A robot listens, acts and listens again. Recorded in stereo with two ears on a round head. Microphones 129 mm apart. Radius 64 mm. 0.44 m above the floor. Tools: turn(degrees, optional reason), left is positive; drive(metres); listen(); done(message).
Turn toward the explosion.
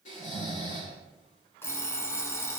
listen()
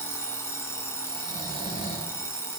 listen()
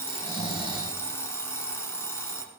done("I can't make out an explosion to turn to.")